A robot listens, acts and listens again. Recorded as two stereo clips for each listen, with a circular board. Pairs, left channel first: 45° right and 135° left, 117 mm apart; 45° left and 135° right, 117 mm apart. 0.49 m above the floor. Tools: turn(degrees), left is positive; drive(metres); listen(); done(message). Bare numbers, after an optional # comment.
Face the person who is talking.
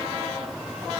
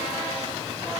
listen()
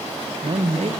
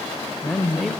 # The man speaking: 135° left.
turn(135)
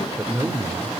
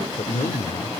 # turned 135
# The man speaking is now 70° left.
turn(70)
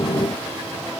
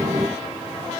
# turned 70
listen()
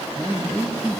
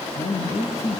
# The man speaking is now 35° left.
turn(35)
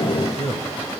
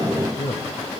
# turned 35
done("Facing the man speaking, 2 to 4 m away.")